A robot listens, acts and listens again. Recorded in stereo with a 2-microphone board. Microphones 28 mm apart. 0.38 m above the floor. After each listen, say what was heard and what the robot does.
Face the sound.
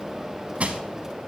The crushing: about 50° right or 130° right. Turn 50° right.
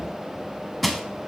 Facing the crushing, under 1 m away.